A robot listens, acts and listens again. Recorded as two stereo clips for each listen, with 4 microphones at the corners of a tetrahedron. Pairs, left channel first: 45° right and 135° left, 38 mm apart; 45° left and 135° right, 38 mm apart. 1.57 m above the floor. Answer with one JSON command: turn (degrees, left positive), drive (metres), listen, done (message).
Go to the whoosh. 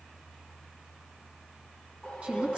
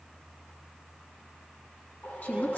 {"turn": 20}
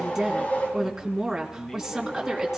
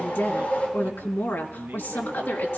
{"drive": 1.0}
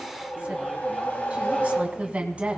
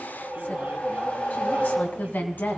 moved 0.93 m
{"drive": 1.0}
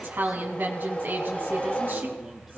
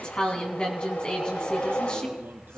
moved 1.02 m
{"turn": 10}
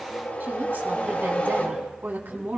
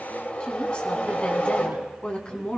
{"drive": 1.0}
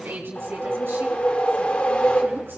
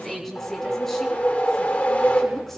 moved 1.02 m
{"drive": 1.0}
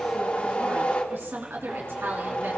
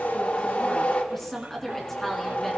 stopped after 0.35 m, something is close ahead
{"done": "I am next to the whoosh."}